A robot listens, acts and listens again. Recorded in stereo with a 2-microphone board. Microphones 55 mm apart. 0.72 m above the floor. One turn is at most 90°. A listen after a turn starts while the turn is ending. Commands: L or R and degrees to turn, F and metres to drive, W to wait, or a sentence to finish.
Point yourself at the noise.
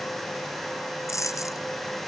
L65
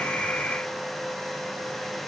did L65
W
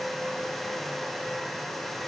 I heard a dropped coin, but can't make it out now. It was about straight ahead or 50° left.